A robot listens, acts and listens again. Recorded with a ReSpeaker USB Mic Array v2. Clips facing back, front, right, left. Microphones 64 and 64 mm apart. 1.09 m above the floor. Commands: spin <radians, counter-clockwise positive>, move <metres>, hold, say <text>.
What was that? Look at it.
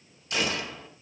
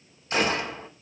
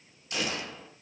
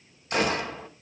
spin 0.87
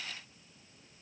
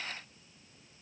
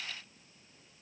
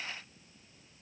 say I heard a gunshot from this way, but can't make it out now.